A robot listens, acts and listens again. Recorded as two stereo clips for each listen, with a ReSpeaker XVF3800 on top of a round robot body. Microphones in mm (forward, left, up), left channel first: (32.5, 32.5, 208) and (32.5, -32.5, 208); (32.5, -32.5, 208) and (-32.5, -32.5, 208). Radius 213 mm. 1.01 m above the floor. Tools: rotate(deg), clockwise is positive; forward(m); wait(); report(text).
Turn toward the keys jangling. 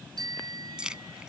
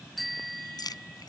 rotate(15)
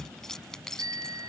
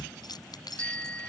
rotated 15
report("Found it: keys jangling, straight ahead.")